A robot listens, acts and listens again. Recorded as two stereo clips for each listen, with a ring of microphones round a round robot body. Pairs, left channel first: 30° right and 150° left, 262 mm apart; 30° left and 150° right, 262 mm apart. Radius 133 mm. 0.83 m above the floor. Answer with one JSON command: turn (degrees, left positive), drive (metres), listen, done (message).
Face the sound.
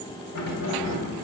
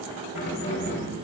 {"turn": -20}
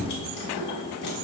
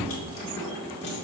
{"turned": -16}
{"turn": -20}
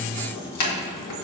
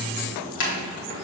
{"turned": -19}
{"turn": -20}
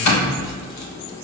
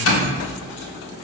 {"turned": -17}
{"turn": -15}
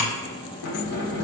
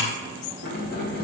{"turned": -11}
{"turn": -25}
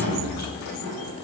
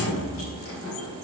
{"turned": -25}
{"done": "Found it: keys jangling, straight ahead."}